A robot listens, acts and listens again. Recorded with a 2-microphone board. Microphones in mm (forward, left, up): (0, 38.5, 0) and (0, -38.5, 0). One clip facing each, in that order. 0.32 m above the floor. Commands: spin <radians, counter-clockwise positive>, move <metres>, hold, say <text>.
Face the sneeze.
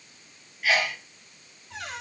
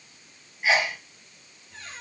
spin -0.44
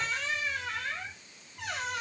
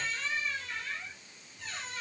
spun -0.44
hold
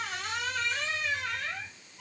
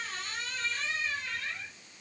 say I heard a sneeze, but can't make it out now. It was about straight ahead or 130° right.